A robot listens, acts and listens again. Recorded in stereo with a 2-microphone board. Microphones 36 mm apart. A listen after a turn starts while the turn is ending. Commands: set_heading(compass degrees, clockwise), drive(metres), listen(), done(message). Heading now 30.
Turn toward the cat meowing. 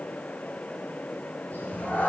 set_heading(335)
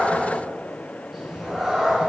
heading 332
set_heading(342)
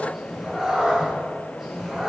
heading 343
done("Facing the cat meowing, 2 to 4 m away.")